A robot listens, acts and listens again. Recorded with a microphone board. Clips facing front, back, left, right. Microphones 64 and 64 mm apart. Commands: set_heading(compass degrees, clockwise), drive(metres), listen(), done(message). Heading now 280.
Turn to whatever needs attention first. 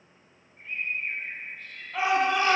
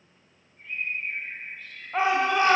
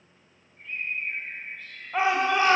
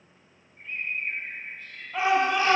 set_heading(140)
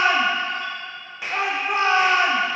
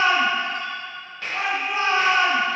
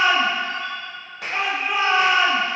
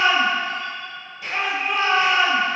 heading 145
done("Facing the shout, 1 to 2 m away.")